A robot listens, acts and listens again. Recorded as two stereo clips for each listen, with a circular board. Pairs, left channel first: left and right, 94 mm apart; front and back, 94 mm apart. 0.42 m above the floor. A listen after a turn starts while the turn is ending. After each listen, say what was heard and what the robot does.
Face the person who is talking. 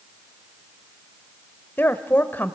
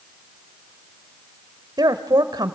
The woman speaking: 155° left. Turn 155° left.
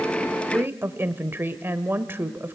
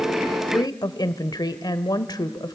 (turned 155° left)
The woman speaking is now 30° right. Turn 30° right.
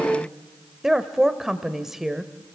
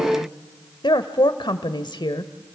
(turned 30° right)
Found it: a woman speaking, straight ahead, 1 to 2 m away.